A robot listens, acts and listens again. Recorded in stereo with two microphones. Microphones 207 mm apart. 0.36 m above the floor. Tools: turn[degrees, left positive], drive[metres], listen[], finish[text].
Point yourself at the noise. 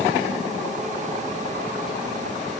Action: listen[]
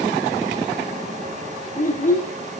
Thought: The child speaking: about 40° left or 140° left.
Action: turn[40]
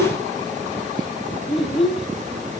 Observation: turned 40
Action: finish[Found it: a child speaking, straight ahead, 2 to 4 m away.]